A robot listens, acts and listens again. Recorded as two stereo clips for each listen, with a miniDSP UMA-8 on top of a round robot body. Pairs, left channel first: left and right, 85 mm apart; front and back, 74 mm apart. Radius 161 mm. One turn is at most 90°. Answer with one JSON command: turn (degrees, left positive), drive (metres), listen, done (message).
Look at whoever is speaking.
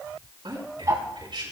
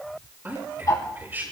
{"turn": -90}
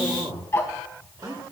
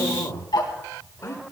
{"turn": -50}
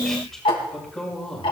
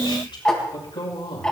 {"done": "Found it: a man speaking, straight ahead."}